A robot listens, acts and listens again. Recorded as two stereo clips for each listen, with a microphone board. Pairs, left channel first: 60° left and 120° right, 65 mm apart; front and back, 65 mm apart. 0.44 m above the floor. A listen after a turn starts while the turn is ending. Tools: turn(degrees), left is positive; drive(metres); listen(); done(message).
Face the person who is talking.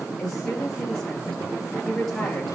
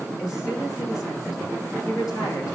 turn(degrees=-25)
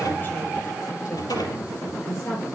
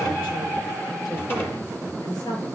turn(degrees=10)
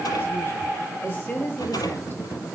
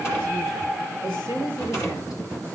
done("Found it: a woman speaking, straight ahead.")